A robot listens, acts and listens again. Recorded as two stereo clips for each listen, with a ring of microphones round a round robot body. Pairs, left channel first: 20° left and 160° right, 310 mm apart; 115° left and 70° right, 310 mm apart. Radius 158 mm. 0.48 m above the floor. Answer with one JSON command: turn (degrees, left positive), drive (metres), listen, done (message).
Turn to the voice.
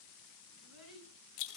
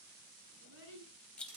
{"turn": -120}
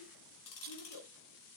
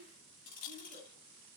{"done": "Found it: a child speaking, straight ahead."}